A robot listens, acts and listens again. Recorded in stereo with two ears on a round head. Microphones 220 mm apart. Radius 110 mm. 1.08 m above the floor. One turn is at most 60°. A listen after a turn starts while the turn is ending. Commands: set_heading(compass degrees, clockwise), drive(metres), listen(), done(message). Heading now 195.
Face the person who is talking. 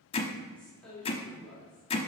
set_heading(165)
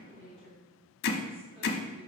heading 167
set_heading(192)
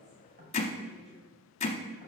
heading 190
listen()
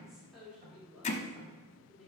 done("Found it: a woman speaking, straight ahead.")